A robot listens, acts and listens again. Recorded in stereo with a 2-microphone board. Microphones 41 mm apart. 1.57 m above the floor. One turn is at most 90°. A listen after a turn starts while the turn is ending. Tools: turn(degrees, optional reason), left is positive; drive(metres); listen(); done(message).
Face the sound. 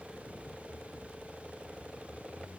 listen()
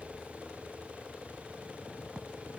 listen()
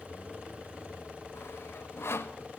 turn(degrees=90)
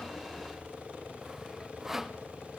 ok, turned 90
turn(degrees=-10, reason="So it is at 10° right.")
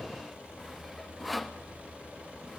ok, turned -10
done("Facing the sawing, under 1 m away.")